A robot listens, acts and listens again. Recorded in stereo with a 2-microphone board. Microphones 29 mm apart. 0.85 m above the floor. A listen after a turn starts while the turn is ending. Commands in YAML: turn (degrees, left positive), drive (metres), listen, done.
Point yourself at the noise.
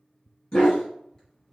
turn: 25
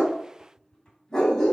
turn: 15
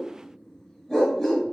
turn: 30
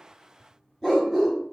turn: 30
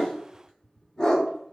turn: 25
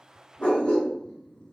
turn: 130
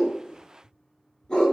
turn: 25
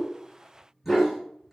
done: "Found it: a dog barking, straight ahead, 1 to 2 m away."